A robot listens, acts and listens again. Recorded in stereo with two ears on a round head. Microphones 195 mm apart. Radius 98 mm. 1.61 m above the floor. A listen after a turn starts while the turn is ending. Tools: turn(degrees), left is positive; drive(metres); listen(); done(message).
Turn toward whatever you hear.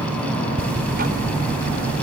turn(degrees=-45)
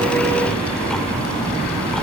listen()
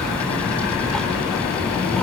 done("Facing the ticking.")